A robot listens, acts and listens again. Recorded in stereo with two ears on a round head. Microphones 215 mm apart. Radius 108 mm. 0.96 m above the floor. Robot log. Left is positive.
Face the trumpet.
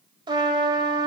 note: The trumpet: about 20° right or 160° right.
cmd yaw -20
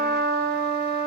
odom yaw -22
note: So it is at 135° right.
cmd yaw -135
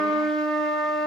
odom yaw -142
end: Facing the trumpet, 2 to 4 m away.